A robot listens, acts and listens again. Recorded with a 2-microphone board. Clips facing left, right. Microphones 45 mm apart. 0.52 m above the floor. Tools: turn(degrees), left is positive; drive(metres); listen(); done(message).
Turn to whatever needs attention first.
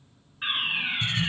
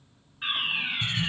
turn(degrees=20)
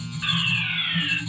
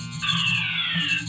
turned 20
done("Facing the fire alarm.")